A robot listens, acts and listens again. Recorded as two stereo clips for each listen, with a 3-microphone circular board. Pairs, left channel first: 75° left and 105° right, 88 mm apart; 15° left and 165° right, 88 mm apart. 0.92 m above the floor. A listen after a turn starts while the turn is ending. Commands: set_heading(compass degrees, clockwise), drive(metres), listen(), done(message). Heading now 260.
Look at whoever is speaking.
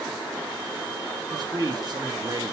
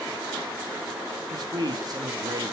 set_heading(30)
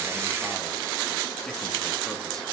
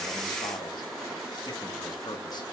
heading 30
listen()
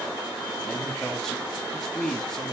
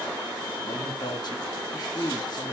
set_heading(40)
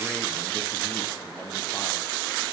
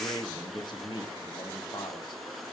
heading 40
listen()
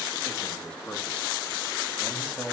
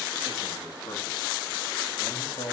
done("Facing the man speaking.")